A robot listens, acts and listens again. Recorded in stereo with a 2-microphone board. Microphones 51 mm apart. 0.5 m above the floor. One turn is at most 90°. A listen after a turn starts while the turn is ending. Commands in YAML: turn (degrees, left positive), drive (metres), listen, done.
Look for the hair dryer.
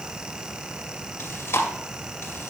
listen: true
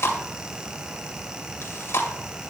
listen: true
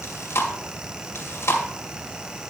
done: "I can't make out a hair dryer, only chewing."